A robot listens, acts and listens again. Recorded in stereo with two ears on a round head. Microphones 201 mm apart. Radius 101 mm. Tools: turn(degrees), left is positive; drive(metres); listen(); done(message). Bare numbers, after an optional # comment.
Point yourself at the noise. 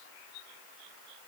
listen()
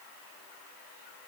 listen()
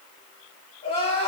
# The crying: about 25° left or 155° left.
turn(25)
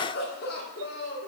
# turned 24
# So it is at 130° left.
turn(130)
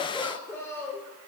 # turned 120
# The crying is now 10° left.
turn(10)
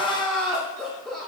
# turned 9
done("Facing the crying, 1 to 2 m away.")